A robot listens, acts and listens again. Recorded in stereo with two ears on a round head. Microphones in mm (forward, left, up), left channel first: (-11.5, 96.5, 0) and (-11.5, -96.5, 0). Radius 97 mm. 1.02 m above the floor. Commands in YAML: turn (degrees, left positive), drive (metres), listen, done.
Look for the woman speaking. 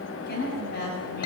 turn: 45
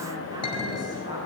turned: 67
listen: true
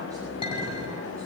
listen: true
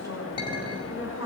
turn: -15
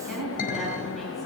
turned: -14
done: "Found it: a woman speaking, straight ahead, over 4 m away."